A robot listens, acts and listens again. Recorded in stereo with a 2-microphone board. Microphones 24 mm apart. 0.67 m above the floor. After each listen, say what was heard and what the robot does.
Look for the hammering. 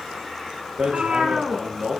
The hammering: about 55° right or 125° right. Turn 55° right.
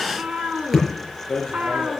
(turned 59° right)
Facing the hammering, over 4 m away.